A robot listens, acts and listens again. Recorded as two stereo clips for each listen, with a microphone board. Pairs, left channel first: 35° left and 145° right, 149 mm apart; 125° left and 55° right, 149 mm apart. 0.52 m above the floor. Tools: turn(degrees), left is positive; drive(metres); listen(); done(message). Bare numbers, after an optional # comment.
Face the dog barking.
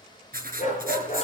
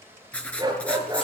done("Found it: a dog barking, straight ahead.")